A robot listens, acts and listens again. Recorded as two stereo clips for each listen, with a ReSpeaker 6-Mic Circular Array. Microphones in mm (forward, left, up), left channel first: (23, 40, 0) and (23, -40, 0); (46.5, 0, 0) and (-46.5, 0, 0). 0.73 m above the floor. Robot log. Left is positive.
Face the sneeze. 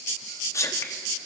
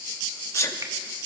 note: The sneeze: 50° left.
cmd yaw +50
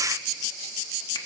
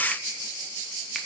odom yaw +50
end: Facing where the sneeze came from. I can't hear it now.